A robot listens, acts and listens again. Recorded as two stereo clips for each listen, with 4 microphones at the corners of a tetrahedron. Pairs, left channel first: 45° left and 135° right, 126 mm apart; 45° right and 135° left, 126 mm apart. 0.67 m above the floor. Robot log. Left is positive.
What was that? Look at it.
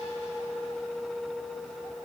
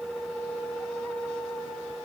cmd idle
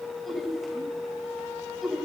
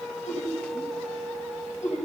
note: The laughter: 45° right.
cmd yaw -45
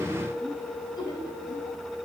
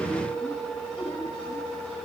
note: The laughter is now 10° right.
cmd yaw -10
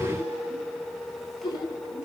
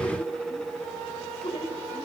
end: Found it: laughter, straight ahead, 2 to 4 m away.